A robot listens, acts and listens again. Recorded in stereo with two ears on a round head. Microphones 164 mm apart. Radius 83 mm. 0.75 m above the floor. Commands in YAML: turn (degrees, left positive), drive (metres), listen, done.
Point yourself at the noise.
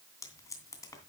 turn: 15
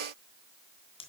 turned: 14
turn: 150
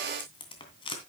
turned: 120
turn: 30
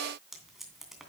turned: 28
done: "Found it: tape being pulled, straight ahead."